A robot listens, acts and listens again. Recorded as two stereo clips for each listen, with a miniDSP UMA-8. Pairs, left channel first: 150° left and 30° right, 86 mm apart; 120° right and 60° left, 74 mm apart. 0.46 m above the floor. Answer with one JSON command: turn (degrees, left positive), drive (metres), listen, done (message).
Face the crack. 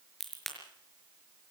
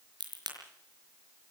{"turn": 60}
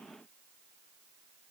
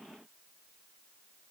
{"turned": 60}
{"done": "I heard a crack from this way, but can't make it out now."}